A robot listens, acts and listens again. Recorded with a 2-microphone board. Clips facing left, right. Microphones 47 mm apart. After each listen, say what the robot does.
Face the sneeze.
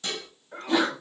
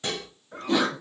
Turn 30° left.
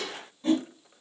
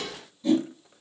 Keep listening.
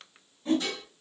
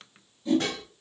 I heard a sneeze, but can't make it out now. It was about 25° right or 145° left.